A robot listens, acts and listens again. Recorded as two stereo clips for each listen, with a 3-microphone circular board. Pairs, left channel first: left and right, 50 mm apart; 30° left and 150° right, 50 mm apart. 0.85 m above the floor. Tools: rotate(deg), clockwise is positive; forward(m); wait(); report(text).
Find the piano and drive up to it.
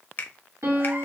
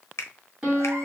rotate(80)
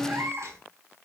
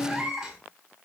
rotate(20)
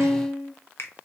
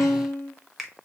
forward(1.0)
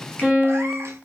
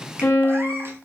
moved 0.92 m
rotate(10)
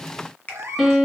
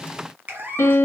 forward(1.0)
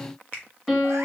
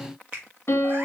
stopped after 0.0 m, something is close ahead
report("I am next to the piano.")